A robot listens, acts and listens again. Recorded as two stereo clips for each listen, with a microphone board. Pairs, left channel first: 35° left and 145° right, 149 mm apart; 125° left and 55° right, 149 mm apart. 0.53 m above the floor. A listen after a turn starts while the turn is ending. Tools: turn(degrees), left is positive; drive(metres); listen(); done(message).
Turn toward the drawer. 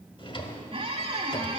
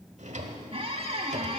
turn(degrees=-20)
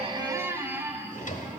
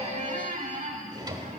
done("Found it: a drawer, straight ahead.")